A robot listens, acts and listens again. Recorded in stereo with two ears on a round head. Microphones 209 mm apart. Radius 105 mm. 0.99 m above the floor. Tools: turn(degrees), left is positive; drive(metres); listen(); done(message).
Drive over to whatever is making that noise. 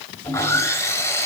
turn(degrees=30)
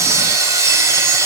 turn(degrees=-15)
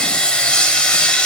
drive(metres=1.0)
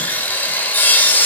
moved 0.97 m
turn(degrees=10)
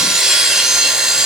drive(metres=1.0)
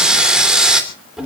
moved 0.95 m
drive(metres=1.0)
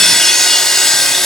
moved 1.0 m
drive(metres=1.0)
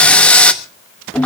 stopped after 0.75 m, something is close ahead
done("Arrived at the sawing, straight ahead.")